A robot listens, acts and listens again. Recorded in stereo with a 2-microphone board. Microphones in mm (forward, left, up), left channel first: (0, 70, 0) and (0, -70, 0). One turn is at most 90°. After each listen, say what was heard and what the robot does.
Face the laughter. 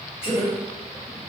The laughter: about 45° left or 135° left. Turn 45° left.
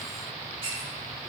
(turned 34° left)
Keep listening.
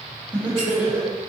So it is at 20° right. Turn 20° right.
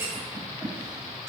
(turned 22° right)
Keep listening.
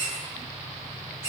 Keep listening.
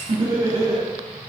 The laughter is now 35° right. Turn 35° right.
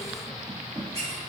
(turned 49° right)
The laughter is now 10° left. Turn 10° left.
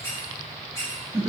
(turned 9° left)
Found it: laughter, straight ahead, 1 to 2 m away.